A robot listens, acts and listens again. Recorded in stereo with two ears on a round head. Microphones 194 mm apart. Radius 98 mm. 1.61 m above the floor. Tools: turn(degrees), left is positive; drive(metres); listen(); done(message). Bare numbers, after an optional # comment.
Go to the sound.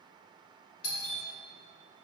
turn(90)
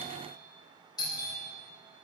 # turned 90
# So it is at 20° left.
turn(20)
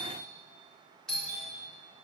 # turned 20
drive(1.0)
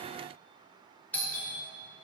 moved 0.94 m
drive(1.0)
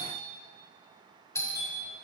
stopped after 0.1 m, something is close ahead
# The doorbell is now 10° left.
turn(10)
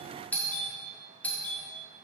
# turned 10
done("Arrived at the doorbell, straight ahead.")